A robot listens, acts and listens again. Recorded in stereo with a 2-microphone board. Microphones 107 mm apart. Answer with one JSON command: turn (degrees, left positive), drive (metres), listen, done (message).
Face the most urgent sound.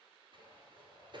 {"listen": true}
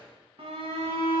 {"turn": -65}
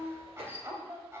{"turn": -30}
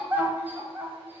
{"turn": -20}
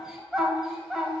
{"done": "Facing the shout, 1 to 2 m away."}